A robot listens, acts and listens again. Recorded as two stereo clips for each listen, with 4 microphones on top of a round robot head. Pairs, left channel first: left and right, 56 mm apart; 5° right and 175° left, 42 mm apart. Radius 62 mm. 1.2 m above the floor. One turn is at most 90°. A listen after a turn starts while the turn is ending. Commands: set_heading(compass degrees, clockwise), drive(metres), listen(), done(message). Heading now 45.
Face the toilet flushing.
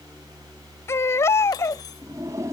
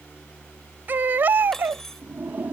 set_heading(135)
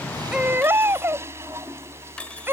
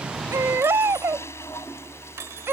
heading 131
set_heading(166)
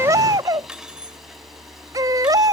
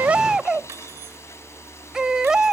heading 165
listen()
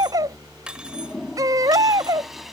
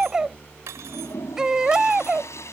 done("Found it: a toilet flushing, straight ahead.")